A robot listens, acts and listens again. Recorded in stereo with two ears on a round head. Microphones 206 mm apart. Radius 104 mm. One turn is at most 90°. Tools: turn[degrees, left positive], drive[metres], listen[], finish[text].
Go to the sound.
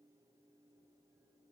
Action: listen[]
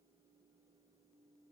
Action: listen[]
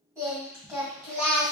Action: turn[-30]
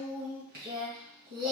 Thought: So it is at 135° right.
Action: turn[-90]
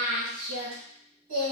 Thought: The singing is now 60° right.
Action: turn[-60]
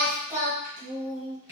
Thought: The singing is now 10° right.
Action: turn[-10]
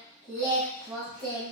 Action: drive[1.0]
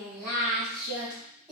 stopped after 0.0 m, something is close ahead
Action: finish[Blocked. The singing is further on, straight ahead.]